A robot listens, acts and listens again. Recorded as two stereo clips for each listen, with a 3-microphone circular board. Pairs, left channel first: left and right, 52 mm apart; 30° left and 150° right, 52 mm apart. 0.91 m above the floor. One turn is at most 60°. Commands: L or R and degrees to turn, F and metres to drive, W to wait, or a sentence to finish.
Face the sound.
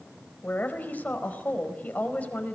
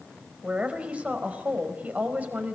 L60
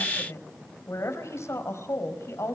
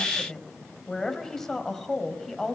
L60
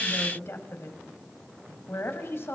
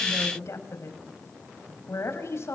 L55
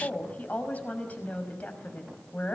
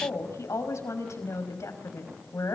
L30
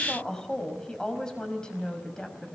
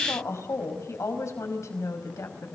L15
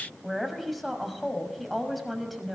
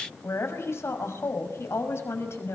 Facing the woman speaking.